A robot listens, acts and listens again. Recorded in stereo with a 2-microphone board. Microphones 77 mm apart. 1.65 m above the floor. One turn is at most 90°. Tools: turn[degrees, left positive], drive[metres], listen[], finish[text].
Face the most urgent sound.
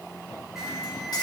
Action: turn[-30]
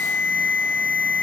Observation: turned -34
Thought: So it is at 25° left.
Action: turn[25]
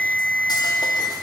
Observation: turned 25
Action: finish[Facing the alarm, over 4 m away.]